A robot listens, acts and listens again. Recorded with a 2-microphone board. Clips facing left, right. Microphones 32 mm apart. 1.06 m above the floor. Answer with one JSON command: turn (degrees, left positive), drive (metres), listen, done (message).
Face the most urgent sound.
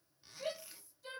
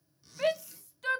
{"turn": -75}
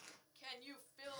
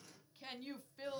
{"done": "Found it: a shout, straight ahead."}